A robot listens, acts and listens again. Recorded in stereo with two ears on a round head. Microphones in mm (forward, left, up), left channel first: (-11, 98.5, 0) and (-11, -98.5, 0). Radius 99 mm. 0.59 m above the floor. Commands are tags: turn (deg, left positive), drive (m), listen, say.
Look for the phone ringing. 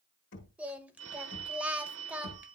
<turn deg="-70"/>
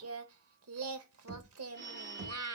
<turn deg="-40"/>
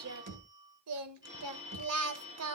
<turn deg="-20"/>
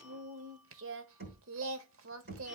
<listen/>
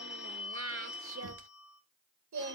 <say>Facing the phone ringing, over 4 m away.</say>